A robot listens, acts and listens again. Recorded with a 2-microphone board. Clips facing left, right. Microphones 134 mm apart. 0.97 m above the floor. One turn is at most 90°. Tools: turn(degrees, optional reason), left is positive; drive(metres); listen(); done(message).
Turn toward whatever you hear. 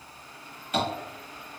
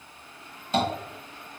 turn(degrees=-30, reason="The tapping: about 30° right or 150° right.")
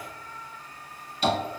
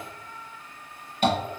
turn(degrees=-90, reason="So it is at 115° right.")
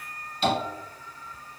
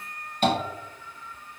turn(degrees=-60, reason="The tapping is now 60° right.")
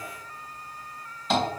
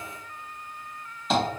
done("Found it: tapping, straight ahead, 1 to 2 m away.")